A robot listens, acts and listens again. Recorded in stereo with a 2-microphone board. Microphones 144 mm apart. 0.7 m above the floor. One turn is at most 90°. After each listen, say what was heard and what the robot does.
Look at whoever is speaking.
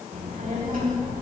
The child speaking: about 70° right or 110° right. Turn 70° right.
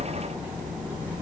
So it is at 10° right. Turn 10° right.
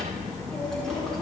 Found it: a child speaking, straight ahead.